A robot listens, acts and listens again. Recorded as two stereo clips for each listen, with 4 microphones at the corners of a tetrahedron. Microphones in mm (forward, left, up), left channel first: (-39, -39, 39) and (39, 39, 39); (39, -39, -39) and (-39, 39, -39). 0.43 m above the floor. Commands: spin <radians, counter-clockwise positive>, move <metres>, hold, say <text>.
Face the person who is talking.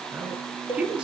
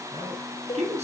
spin 2.18
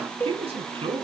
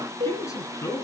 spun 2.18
spin 0.26
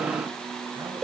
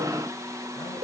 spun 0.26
hold
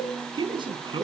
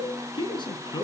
say Found it: a man speaking, straight ahead, over 4 m away.